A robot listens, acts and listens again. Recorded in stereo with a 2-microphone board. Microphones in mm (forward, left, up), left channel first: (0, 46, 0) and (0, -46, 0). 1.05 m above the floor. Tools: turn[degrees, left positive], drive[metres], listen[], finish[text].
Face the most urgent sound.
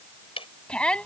Action: turn[30]
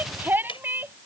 Thought: So it is at 20° right.
Action: turn[-20]
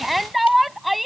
Action: finish[Facing the shout.]